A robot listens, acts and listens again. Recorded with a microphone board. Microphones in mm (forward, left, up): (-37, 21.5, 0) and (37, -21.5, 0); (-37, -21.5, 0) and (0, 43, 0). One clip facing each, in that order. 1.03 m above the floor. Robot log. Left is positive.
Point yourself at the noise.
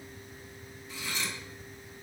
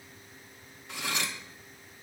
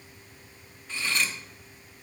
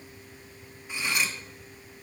note: The cutlery clinking: 15° right.
cmd yaw -15
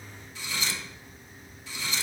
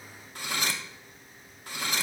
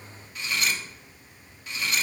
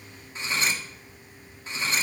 end: Facing the cutlery clinking, under 1 m away.